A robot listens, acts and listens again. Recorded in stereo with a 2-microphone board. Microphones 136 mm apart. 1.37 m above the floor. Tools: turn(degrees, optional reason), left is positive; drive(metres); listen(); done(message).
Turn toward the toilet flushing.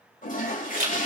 turn(degrees=90)
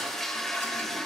done("Found it: a toilet flushing, straight ahead.")